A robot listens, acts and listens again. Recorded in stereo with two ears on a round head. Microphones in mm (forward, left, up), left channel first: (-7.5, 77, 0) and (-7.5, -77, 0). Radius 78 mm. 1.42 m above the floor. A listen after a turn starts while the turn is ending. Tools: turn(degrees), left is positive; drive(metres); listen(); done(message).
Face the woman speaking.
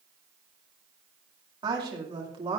turn(degrees=-35)
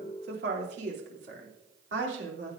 turn(degrees=-105)
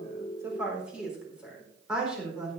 done("Found it: a woman speaking, straight ahead, over 4 m away.")